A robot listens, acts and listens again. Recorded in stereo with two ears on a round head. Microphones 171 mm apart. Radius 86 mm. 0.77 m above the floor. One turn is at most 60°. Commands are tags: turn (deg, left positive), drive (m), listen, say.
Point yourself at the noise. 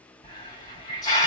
<turn deg="20"/>
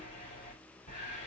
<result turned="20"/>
<turn deg="60"/>
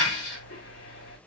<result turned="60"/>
<turn deg="60"/>
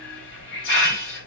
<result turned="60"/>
<turn deg="60"/>
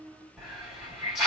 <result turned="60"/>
<say>Facing the hiss.</say>